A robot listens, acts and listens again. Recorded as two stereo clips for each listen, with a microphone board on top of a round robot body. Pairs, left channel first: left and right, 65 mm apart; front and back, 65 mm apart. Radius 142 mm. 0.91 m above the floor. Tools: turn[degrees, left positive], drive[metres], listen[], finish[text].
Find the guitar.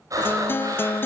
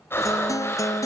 Thought: The guitar: 35° left.
Action: turn[35]
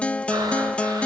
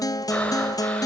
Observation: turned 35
Thought: The guitar is now 15° left.
Action: turn[15]
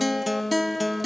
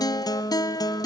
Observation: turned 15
Action: finish[Facing the guitar.]